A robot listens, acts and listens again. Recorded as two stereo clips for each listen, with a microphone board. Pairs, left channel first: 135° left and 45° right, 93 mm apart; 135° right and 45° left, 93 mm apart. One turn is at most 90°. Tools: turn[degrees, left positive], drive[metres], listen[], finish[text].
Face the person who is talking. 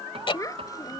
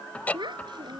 Thought: The child speaking: 80° left.
Action: turn[80]
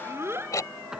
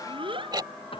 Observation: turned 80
Thought: The child speaking is now 20° left.
Action: turn[20]
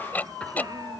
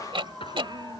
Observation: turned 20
Action: listen[]
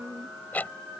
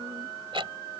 Action: listen[]
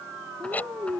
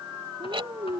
Thought: The child speaking is now 10° left.
Action: turn[10]
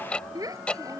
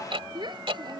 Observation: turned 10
Action: finish[Facing the child speaking.]